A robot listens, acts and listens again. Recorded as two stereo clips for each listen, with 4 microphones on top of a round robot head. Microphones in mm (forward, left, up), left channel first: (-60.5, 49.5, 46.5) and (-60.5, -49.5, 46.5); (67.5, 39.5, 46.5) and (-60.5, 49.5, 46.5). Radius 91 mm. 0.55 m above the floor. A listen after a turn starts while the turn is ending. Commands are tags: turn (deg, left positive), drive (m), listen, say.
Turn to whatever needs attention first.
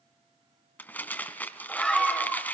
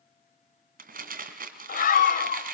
<say>Facing the scream, 2 to 4 m away.</say>